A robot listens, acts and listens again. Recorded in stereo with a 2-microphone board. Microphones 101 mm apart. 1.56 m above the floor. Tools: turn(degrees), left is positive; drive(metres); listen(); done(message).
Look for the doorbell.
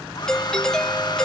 turn(degrees=30)
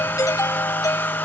turn(degrees=145)
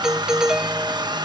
done("Facing the doorbell.")